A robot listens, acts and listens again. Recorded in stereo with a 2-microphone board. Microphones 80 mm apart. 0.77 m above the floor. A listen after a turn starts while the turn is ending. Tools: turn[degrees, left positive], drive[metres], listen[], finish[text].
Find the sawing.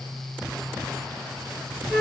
Action: listen[]
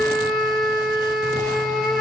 Action: listen[]
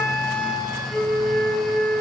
Action: finish[I can't make out sawing to turn to.]